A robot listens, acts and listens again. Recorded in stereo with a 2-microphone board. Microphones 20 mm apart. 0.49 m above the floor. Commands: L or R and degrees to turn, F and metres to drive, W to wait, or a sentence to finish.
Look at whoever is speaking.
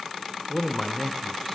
L15
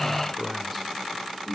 Found it: a man speaking, straight ahead.